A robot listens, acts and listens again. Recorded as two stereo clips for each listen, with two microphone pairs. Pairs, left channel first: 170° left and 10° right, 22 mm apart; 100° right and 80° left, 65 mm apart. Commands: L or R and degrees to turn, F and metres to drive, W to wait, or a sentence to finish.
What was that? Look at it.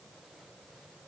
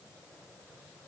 W
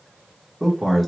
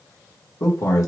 R115
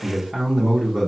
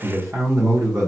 L65
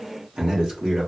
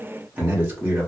L25
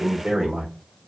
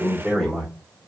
Facing the man speaking, 1 to 2 m away.